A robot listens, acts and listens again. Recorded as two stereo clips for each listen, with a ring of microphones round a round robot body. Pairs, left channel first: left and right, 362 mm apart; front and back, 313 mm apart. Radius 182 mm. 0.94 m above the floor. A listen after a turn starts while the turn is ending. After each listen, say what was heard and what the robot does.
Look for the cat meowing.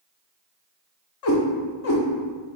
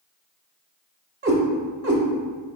The cat meowing: 135° left. Turn 135° left.
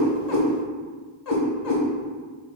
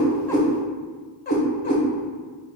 The cat meowing is now 65° left. Turn 65° left.
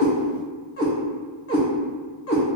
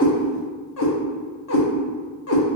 The cat meowing is now 40° left. Turn 40° left.
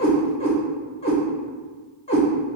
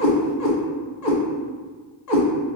The cat meowing is now 15° left. Turn 15° left.
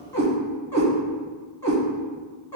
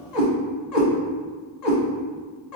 Found it: a cat meowing, straight ahead, 1 to 2 m away.